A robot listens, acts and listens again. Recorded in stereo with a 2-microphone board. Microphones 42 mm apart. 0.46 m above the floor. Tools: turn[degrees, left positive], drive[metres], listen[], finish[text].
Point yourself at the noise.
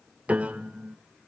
Thought: The piano: about 30° right or 150° right.
Action: turn[-30]
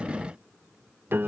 Thought: So it is at 110° right.
Action: turn[-110]
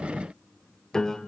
Thought: The piano is now 15° left.
Action: turn[15]
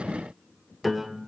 Action: finish[Found it: a piano, straight ahead.]